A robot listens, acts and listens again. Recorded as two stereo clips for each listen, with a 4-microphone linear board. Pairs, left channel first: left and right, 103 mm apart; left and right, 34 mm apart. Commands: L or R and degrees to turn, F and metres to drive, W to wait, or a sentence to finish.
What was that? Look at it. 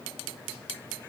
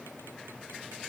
W
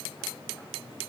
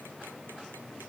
W
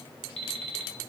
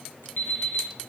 L70
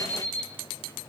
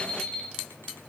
L15
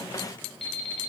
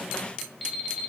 Found it: an alarm clock, straight ahead.